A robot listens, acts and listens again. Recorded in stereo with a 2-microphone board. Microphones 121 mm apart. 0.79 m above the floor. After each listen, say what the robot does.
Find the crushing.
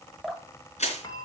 Turn 70° left.
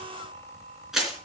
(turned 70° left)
Found it: crushing, straight ahead, 2 to 4 m away.